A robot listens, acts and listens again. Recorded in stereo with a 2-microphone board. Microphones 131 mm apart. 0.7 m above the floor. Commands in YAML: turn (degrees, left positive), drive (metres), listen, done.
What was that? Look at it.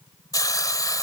turn: 30
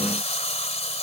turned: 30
turn: 120
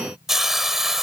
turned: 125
done: "Facing the hiss."